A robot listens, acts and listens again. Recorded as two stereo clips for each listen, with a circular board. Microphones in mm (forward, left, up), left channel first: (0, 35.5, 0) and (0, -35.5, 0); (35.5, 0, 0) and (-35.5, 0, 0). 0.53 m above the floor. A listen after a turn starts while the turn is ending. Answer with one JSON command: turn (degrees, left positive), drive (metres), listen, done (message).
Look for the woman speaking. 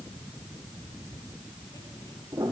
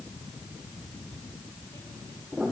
{"listen": true}
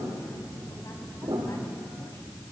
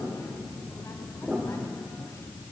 {"listen": true}
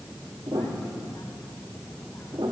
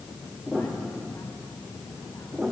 {"done": "I can't make out a woman speaking, only a piano."}